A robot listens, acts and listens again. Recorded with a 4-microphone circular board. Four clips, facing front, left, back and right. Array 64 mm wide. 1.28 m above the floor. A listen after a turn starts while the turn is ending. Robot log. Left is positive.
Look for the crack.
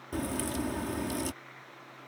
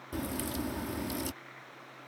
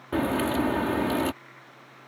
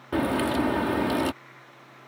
note: The crack: 125° right.
cmd yaw -125
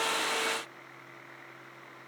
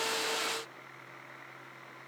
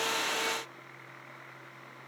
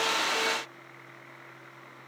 end: I heard a crack from this way, but can't make it out now.